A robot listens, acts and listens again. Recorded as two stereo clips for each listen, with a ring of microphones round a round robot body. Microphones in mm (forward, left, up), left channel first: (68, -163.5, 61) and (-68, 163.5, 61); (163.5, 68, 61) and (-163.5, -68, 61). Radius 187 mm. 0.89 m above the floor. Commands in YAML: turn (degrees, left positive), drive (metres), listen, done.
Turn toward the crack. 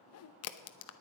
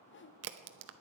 turn: -110
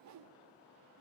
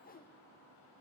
done: "Facing where the crack came from. I can't hear it now."